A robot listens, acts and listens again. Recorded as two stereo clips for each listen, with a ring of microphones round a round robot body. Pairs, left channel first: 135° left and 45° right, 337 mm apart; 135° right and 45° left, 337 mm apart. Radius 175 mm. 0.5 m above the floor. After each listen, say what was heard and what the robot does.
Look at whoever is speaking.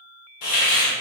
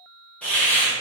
Keep listening.
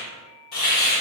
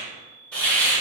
Keep listening.
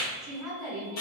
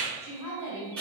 The woman speaking: 135° right. Turn 135° right.
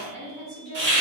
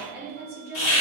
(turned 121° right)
The woman speaking is now 10° right. Turn 10° right.
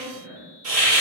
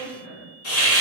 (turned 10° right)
Facing the woman speaking, 1 to 2 m away.